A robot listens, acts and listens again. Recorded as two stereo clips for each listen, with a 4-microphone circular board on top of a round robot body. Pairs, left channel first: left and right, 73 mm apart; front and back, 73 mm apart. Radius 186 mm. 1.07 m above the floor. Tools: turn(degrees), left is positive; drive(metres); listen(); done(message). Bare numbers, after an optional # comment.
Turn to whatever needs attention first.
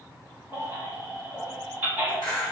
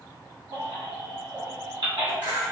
# The baby crying: 165° right.
turn(-165)
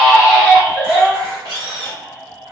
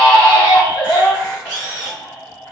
# The baby crying is now 10° right.
turn(-10)
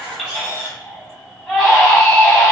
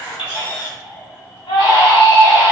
done("Facing the baby crying, 1 to 2 m away.")